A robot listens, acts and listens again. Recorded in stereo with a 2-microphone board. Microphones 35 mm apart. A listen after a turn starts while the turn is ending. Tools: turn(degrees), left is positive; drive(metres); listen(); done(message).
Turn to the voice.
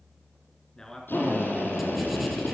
turn(degrees=20)
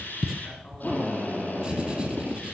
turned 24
listen()
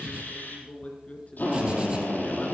turn(degrees=135)
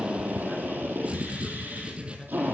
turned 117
turn(degrees=20)
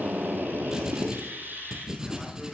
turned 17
listen()
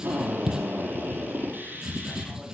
done("I heard a man speaking from this way, but can't make it out now.")